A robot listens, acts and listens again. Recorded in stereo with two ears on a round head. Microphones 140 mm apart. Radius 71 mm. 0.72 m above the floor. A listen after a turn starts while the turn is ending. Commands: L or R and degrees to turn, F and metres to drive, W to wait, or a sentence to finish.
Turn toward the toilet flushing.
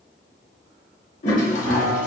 L50
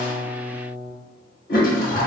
L70
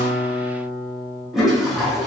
Found it: a toilet flushing, straight ahead.